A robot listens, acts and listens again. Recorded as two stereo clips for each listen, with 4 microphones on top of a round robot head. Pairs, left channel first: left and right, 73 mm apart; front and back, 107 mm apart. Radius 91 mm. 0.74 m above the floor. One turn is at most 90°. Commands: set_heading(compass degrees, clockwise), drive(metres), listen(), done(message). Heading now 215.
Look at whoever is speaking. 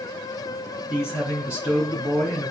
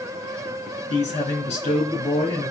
set_heading(240)
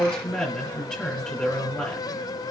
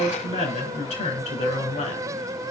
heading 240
done("Facing the man speaking, 2 to 4 m away.")